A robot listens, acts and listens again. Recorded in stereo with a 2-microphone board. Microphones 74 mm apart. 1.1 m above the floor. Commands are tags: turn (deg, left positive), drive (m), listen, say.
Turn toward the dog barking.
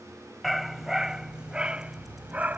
<turn deg="-25"/>
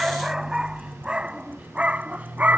<turn deg="-20"/>
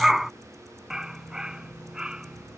<turn deg="-30"/>
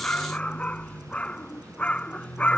<turn deg="15"/>
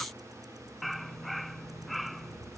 <say>Facing the dog barking.</say>